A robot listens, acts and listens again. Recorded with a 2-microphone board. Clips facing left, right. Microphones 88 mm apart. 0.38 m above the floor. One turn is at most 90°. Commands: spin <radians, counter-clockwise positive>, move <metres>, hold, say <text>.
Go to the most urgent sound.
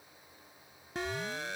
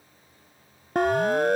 spin -0.96
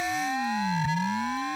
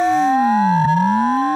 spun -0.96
spin -0.96
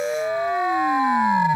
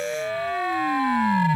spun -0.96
spin 0.35
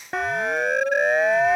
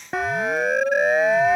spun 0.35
move 1.0
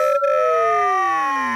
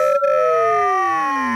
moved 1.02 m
move 1.0
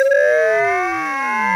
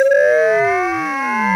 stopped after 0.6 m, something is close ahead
say I am next to the siren.